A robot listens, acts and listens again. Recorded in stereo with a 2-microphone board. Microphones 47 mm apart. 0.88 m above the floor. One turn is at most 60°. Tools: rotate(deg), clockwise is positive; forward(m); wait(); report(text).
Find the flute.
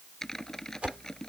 wait()
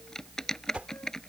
wait()
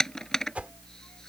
report("I can't make out a flute to turn to.")